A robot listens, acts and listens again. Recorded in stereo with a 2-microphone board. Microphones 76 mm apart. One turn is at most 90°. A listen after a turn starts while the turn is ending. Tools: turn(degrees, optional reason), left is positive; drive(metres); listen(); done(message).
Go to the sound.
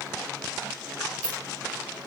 turn(degrees=-90)
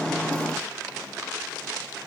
listen()
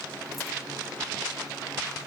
listen()
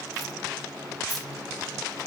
done("I heard keys jangling from this way, but can't make it out now. I did not reach it.")